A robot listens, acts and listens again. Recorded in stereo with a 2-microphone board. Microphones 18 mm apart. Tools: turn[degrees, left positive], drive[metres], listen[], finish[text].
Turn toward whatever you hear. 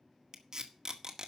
Thought: The tape being pulled: about 45° right or 135° right.
Action: turn[-45]
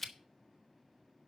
Action: finish[Facing the tape being pulled, 1 to 2 m away.]